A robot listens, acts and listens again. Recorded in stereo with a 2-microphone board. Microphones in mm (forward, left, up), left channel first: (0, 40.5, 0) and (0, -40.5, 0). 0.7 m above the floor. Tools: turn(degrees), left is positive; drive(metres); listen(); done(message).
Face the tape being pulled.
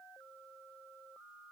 listen()
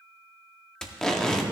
turn(degrees=30)
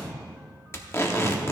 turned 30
turn(degrees=140)
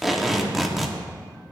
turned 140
done("Found it: tape being pulled, straight ahead, 1 to 2 m away.")